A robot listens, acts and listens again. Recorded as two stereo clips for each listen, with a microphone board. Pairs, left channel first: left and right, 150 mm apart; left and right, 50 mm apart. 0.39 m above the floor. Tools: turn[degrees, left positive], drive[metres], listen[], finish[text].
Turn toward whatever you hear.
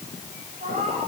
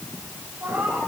Thought: The cat meowing: about 65° right or 115° right.
Action: turn[-65]
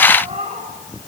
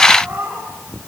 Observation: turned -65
Thought: So it is at 50° right.
Action: turn[-50]
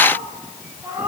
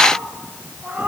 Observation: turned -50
Thought: The cat meowing is now 20° right.
Action: turn[-20]
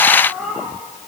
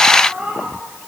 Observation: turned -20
Action: finish[Found it: a cat meowing, straight ahead.]